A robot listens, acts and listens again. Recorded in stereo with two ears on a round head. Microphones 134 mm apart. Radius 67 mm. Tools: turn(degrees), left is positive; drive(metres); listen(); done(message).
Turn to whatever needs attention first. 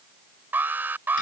turn(degrees=-30)
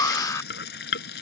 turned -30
turn(degrees=20)
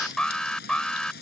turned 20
done("Facing the alarm.")